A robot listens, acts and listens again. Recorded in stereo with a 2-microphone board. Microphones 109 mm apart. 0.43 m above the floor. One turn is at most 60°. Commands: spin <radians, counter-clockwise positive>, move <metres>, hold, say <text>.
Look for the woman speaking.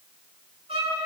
hold
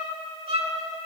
hold
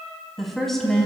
spin 0.52
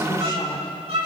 hold
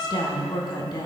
spin 1.05
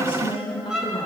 spin 0.96
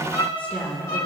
spin 0.26
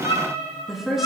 say Found it: a woman speaking, straight ahead, 2 to 4 m away.